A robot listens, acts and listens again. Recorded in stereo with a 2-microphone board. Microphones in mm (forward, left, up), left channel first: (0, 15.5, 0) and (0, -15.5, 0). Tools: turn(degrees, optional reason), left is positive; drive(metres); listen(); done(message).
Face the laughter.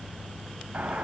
listen()
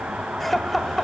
turn(degrees=30)
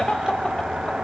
turn(degrees=145, reason="So it is at 145° left.")
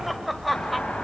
done("Facing the laughter, 1 to 2 m away.")